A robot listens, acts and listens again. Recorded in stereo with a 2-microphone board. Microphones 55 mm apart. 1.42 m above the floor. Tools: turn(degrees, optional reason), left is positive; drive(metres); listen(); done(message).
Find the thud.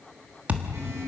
turn(degrees=-25, reason="The thud: about 25° right or 155° right.")
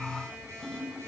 listen()
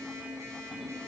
done("I heard a thud, but can't make it out now. It was about straight ahead or 130° right.")